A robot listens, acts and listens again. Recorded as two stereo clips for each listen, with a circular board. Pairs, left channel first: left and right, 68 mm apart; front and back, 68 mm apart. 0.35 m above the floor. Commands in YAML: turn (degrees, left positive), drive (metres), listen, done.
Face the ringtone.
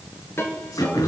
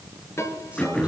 turn: 40
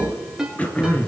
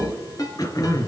turn: -10
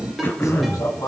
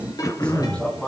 done: "Facing the ringtone."